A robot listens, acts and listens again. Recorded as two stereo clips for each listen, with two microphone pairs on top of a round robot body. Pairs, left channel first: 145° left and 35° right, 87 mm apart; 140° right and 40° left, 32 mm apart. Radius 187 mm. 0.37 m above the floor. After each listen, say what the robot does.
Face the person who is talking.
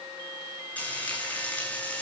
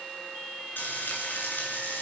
Keep listening.
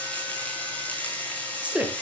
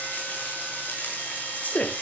Turn 105° right.
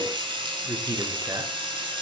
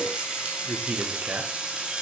Turn 15° left.
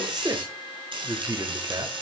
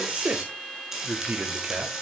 Facing the man speaking, 2 to 4 m away.